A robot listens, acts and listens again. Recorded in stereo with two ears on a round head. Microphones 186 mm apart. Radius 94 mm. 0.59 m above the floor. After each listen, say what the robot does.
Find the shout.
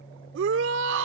Turn 65° right.
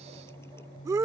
Turn 15° right.
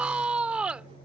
Found it: a shout, straight ahead.